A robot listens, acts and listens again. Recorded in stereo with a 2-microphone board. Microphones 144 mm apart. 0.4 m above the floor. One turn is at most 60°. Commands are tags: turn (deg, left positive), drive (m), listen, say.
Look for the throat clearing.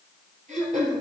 <turn deg="-60"/>
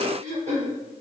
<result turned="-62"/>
<turn deg="-55"/>
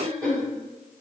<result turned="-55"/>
<say>Facing the throat clearing.</say>